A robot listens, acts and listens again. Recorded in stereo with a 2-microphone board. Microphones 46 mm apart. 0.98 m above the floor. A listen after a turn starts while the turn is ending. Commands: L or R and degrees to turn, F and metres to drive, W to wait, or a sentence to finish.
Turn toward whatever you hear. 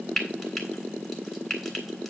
L30
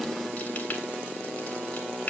L145
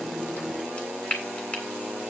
L25
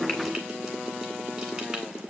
W
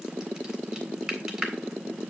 R10
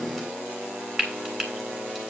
Found it: frying, straight ahead.